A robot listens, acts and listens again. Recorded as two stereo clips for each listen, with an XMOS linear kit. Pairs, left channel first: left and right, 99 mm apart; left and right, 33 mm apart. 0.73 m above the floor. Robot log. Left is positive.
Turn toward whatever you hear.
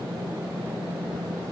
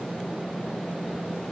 cmd idle
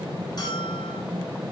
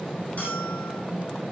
note: The bell: about 45° left or 135° left.
cmd yaw +45
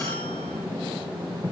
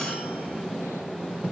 cmd idle
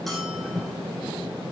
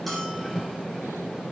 cmd idle
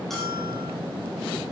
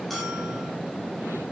end: I heard a bell, but can't make it out now. It was about straight ahead or 90° left.